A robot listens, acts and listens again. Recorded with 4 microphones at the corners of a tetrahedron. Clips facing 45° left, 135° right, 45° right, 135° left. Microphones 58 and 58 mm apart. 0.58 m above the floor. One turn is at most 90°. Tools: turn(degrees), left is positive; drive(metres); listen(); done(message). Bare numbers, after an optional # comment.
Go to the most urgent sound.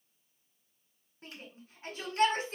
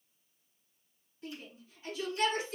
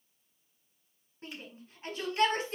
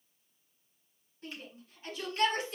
drive(1.0)
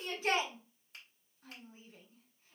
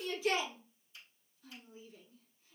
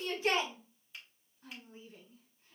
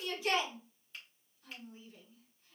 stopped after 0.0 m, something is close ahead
done("Something is in my way. I am facing the shout but have not reached it.")